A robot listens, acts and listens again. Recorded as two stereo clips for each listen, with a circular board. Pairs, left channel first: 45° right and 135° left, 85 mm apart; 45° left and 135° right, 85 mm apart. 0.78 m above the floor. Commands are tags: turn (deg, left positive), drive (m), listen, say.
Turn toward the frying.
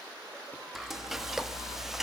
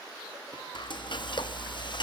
<turn deg="50"/>
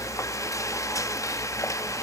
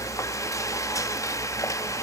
<say>Found it: frying, straight ahead, under 1 m away.</say>